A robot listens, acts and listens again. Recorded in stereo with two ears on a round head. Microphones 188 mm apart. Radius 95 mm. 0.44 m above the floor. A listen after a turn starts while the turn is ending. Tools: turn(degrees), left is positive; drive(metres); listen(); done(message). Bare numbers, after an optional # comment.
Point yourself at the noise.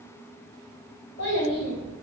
# The child speaking: about 45° left or 135° left.
turn(45)
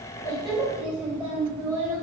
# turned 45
# So it is at 25° right.
turn(-25)
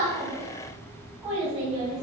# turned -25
# The child speaking is now 20° right.
turn(-20)
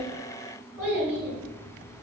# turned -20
# The child speaking is now 10° right.
turn(-10)
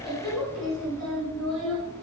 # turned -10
done("Facing the child speaking, 2 to 4 m away.")